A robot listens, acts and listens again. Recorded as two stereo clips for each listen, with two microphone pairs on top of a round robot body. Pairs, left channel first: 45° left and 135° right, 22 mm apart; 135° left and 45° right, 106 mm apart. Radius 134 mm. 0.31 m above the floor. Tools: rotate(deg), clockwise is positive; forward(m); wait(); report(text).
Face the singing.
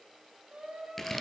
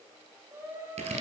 rotate(110)
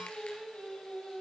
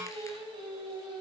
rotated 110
report("Facing the singing.")